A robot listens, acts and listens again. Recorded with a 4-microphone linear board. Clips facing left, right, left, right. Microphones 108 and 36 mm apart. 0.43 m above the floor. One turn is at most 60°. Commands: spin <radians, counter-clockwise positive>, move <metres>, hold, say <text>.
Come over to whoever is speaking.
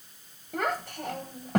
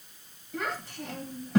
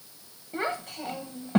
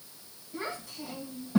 spin 1.05
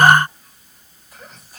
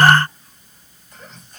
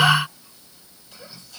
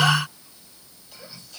move 1.0
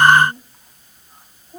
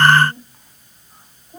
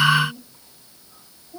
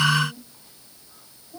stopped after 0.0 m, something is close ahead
say Blocked. The child speaking is further on, straight ahead.